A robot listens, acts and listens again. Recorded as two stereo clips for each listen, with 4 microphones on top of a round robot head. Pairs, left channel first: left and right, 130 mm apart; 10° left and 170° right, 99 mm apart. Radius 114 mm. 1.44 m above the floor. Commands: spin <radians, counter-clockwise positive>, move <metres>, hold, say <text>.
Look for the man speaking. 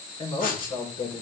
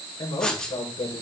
spin 0.79
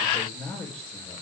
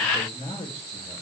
spin 0.17
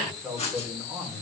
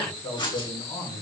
spin -0.17
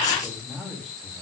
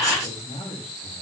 say Facing the man speaking.